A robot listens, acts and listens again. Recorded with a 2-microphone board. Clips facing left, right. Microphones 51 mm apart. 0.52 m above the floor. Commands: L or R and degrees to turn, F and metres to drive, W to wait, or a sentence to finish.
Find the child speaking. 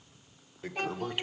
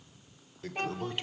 R30
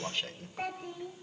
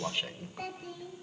L30
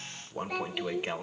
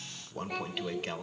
Found it: a child speaking, straight ahead.